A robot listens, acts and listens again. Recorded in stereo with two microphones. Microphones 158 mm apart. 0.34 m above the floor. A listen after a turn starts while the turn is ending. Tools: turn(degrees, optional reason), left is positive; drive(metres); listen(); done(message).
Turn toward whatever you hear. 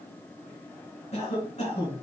turn(degrees=45, reason="The cough: about 45° left or 135° left.")
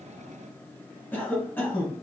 turn(degrees=15, reason="So it is at 15° left.")
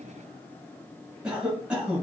done("Facing the cough.")